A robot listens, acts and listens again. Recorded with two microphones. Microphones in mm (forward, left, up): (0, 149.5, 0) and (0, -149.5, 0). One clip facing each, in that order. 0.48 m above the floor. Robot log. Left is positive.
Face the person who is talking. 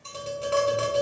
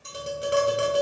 cmd idle
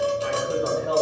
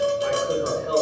note: The man speaking: about 45° right or 135° right.
cmd yaw -45
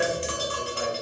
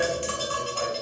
cmd idle
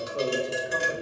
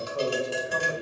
note: So it is at 20° left.
cmd yaw +20
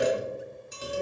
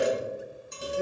note: The man speaking is now 15° left.
cmd yaw +15
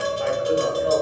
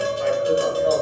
note: The man speaking is now 10° left.
cmd yaw +10
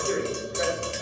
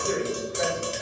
end: Found it: a man speaking, straight ahead, 2 to 4 m away.